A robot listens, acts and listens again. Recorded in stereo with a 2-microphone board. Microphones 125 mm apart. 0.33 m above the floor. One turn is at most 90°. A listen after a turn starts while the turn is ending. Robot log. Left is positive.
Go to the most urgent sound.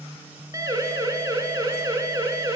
note: The siren: about 25° right or 155° right.
cmd yaw -25
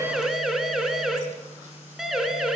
cmd fwd 1.0
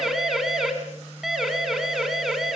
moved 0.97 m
cmd fwd 1.0
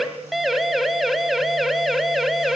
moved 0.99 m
cmd fwd 1.0
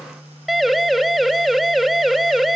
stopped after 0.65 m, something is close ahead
end: Arrived at the siren, straight ahead.